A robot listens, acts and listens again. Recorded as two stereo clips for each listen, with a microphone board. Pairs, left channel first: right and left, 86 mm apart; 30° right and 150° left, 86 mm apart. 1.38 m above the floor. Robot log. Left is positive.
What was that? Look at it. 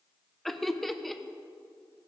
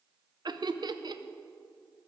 note: The laughter: straight behind.
cmd yaw +180
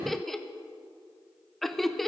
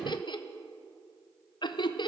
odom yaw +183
end: Found it: laughter, straight ahead.